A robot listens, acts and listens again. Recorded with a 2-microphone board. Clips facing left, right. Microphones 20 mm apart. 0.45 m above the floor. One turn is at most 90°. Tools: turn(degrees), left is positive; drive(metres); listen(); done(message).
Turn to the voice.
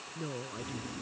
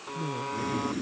turn(degrees=40)
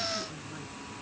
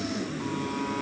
listen()
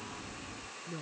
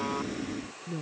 done("Found it: a woman speaking, straight ahead.")